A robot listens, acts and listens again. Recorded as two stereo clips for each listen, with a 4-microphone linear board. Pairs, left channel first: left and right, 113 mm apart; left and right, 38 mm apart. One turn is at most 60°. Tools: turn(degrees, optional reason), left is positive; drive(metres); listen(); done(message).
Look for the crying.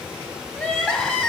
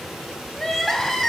turn(degrees=30)
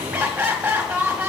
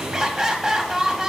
turn(degrees=-15, reason="So it is at 15° right.")
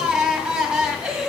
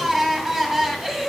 done("Facing the crying, 1 to 2 m away.")